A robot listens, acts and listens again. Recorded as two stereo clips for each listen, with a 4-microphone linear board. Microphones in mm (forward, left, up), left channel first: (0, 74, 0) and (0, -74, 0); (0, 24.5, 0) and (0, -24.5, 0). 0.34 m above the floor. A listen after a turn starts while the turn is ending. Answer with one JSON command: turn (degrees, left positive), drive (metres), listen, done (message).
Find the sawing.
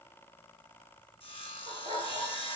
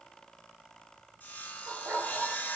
{"turn": 40}
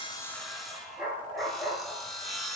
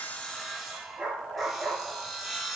{"done": "Found it: sawing, straight ahead."}